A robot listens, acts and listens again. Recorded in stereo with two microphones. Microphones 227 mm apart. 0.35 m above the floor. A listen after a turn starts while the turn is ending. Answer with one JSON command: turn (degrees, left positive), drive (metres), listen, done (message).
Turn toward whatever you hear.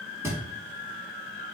{"turn": -30}
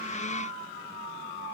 {"listen": true}
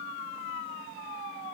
{"done": "I heard a thud, but can't make it out now. It was about 20° left or 140° right."}